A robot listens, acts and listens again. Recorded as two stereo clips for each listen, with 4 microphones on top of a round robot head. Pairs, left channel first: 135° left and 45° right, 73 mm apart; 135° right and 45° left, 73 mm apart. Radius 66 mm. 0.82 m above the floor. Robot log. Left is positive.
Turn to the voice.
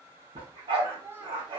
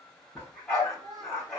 note: The child speaking: 15° left.
cmd yaw +15
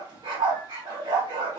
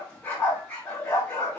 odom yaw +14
cmd idle
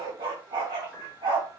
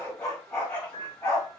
cmd idle
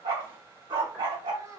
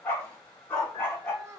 end: Found it: a child speaking, straight ahead, 1 to 2 m away.